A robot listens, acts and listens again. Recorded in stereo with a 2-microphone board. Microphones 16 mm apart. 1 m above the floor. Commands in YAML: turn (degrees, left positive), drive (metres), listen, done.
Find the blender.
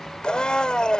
turn: 55
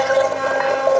done: "Facing the blender."